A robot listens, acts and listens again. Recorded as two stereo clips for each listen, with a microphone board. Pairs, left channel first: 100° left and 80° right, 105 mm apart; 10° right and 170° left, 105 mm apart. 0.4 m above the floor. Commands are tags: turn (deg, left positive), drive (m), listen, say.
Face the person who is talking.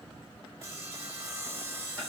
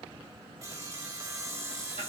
<listen/>
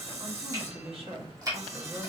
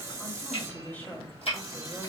<turn deg="-80"/>
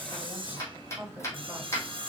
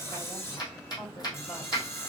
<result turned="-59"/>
<turn deg="-25"/>
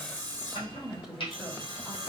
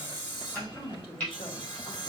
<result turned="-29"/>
<say>Found it: a woman speaking, straight ahead, 1 to 2 m away.</say>